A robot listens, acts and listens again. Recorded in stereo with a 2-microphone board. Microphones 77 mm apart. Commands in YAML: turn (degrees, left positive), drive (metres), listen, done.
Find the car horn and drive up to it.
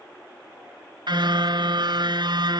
turn: -75
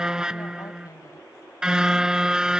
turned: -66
turn: -10
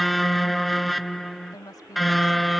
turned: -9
drive: 1.0
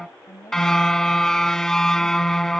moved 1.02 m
drive: 1.0
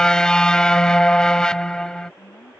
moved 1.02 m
turn: 10
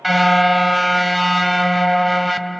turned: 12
drive: 1.0
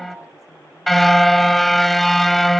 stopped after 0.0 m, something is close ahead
done: "I am next to the car horn."